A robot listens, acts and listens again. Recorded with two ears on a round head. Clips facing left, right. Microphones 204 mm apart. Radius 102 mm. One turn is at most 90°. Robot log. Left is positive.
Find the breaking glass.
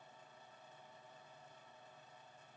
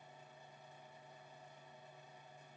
cmd idle
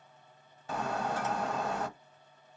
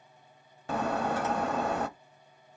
note: The breaking glass: about 50° right or 130° right.
cmd yaw -50
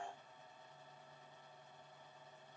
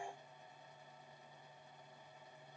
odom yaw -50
cmd idle
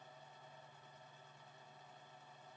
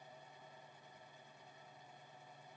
end: I heard breaking glass, but can't make it out now. It was about straight ahead or 80° right.